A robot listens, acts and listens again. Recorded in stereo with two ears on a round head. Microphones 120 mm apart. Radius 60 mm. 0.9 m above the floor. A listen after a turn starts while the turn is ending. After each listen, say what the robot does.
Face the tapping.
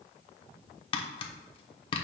Turn 40° left.
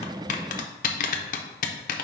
Turn 95° left.
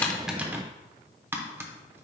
Turn 20° right.
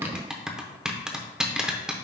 Found it: tapping, straight ahead.